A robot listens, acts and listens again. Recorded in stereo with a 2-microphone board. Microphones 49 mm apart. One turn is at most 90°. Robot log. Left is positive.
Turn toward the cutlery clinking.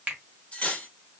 note: The cutlery clinking: about 25° left or 155° left.
cmd yaw +25
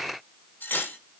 note: So it is at 125° left.
cmd yaw +90
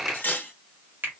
note: The cutlery clinking is now 45° left.
cmd yaw +45
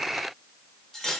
note: The cutlery clinking is now 10° left.
cmd yaw +10
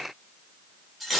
end: Found it: cutlery clinking, straight ahead, under 1 m away.